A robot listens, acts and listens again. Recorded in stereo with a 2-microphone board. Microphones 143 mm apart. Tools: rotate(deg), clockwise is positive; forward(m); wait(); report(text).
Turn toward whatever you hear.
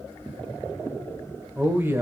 rotate(20)
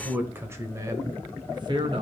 rotate(35)
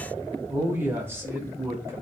rotate(20)
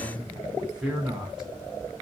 report("Found it: a man speaking, straight ahead.")